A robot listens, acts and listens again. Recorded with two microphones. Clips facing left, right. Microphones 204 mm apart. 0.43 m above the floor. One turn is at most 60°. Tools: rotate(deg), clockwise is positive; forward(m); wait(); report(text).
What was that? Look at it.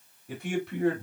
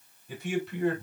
rotate(-60)
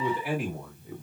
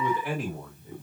rotate(-10)
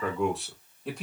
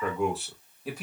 report("Facing the man speaking.")